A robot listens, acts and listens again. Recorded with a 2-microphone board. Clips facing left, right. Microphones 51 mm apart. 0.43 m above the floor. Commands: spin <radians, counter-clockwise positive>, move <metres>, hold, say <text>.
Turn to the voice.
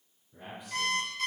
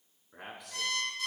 spin -1.57
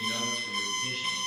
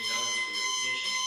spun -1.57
hold
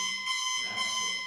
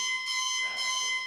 hold
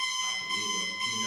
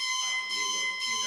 say Facing where the man speaking came from. I can't hear it now.